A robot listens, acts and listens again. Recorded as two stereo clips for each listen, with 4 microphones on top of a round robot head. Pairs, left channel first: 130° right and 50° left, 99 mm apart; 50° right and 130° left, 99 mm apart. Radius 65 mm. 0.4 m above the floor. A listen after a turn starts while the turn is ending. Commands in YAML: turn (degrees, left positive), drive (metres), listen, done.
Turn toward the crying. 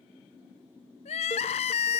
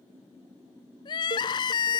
turn: -100
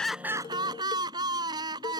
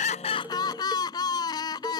done: "Facing the crying."